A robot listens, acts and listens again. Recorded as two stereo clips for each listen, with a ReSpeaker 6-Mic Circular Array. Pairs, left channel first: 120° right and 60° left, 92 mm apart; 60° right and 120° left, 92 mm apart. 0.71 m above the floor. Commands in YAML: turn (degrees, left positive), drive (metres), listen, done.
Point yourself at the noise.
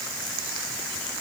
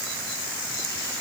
listen: true
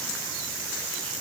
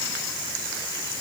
listen: true
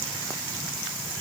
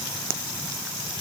done: "I can't make out anything."